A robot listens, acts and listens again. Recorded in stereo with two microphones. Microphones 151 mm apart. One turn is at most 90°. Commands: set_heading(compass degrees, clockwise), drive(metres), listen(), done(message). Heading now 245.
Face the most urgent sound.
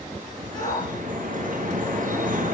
set_heading(215)
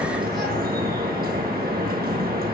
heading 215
listen()
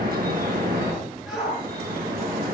done("Found it: a shout, straight ahead, over 4 m away.")